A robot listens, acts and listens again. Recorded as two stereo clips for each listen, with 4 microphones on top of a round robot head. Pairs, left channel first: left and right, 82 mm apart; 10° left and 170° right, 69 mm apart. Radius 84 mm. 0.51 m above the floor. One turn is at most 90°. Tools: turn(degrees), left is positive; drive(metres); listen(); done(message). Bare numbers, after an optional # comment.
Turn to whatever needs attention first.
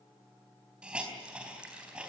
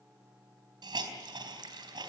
listen()
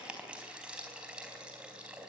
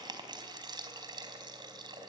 listen()
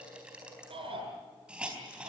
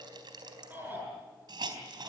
# The shout: 100° right.
turn(-90)
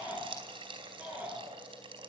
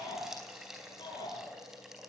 # The shout is now 15° right.
turn(-15)
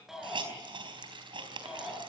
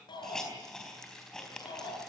done("Found it: a shout, straight ahead, over 4 m away.")